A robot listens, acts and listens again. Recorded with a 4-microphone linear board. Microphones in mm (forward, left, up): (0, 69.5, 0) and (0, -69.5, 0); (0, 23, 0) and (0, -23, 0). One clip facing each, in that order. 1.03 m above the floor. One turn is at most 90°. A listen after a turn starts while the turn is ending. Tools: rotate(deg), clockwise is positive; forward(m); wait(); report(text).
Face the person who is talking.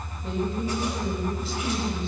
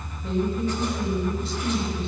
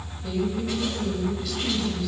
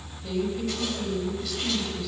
rotate(-30)
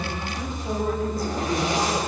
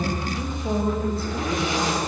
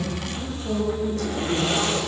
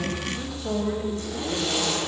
rotate(30)
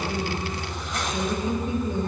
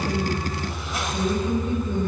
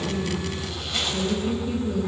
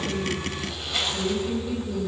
rotate(-15)
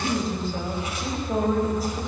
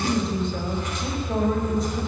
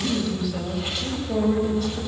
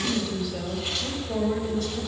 report("Found it: a woman speaking, straight ahead.")